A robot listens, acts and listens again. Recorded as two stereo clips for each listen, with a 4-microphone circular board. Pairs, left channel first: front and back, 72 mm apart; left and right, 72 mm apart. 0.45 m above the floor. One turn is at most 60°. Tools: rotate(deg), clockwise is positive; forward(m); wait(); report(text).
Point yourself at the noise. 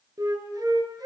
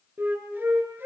rotate(60)
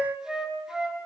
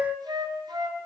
rotate(60)
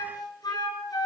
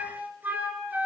rotate(25)
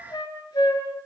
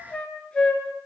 rotate(-15)
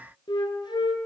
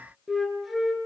report("Found it: a flute, straight ahead, over 4 m away.")